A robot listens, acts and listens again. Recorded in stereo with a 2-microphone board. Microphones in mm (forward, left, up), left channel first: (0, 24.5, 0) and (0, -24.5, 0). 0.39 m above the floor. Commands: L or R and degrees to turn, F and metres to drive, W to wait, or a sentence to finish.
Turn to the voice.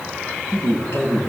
L70
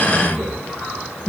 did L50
L20
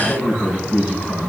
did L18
Facing the man speaking, over 4 m away.